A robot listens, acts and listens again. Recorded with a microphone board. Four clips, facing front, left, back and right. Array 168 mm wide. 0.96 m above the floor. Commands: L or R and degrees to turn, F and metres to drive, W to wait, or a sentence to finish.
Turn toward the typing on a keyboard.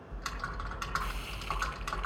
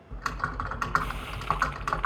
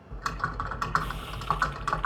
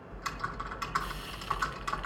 L130
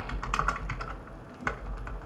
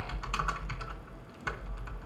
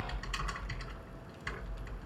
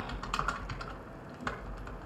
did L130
R15
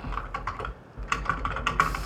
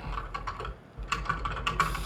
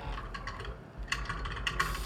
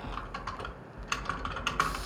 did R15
Found it: typing on a keyboard, straight ahead, 1 to 2 m away.